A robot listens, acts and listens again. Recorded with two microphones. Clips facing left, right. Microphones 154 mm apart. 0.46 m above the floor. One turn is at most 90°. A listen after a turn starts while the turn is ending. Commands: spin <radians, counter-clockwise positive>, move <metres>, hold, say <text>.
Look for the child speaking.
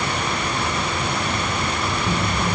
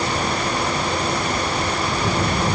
spin -1.31
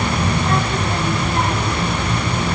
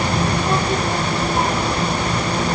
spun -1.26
spin -0.17
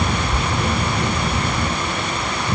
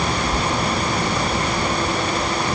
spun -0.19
say Found it: a child speaking, straight ahead.